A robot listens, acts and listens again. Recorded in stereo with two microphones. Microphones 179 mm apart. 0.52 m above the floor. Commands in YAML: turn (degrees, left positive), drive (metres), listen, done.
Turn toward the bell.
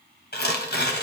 listen: true
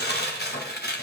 listen: true
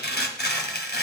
done: "I can't make out a bell, only tearing paper."